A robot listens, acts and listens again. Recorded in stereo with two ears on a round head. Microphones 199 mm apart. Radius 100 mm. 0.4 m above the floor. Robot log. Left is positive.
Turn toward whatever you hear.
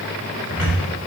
note: The cupboard door: about 70° left or 110° left.
cmd yaw +70
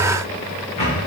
note: So it is at 30° left.
cmd yaw +30
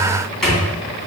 end: Facing the cupboard door, 2 to 4 m away.